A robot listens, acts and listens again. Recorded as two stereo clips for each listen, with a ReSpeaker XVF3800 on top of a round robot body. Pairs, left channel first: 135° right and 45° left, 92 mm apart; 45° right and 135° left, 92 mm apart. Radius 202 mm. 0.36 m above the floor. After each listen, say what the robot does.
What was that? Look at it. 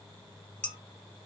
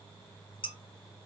Turn 55° right.
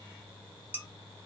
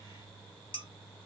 Turn 20° right.
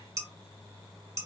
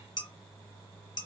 Facing the dishes clattering, 1 to 2 m away.